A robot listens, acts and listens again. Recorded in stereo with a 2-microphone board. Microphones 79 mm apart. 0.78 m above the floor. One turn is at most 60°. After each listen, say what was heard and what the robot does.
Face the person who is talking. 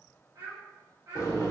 The child speaking: about 35° right or 145° right. Turn 35° right.
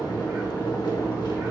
Keep listening.
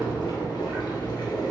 Keep listening.
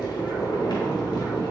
I heard a child speaking, but can't make it out now. It was about straight ahead or 110° right.